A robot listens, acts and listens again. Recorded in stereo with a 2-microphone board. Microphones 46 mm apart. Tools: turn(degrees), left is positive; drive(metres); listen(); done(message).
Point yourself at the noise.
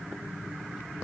listen()
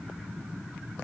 listen()
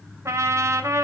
turn(degrees=-90)
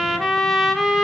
done("Facing the trumpet, 2 to 4 m away.")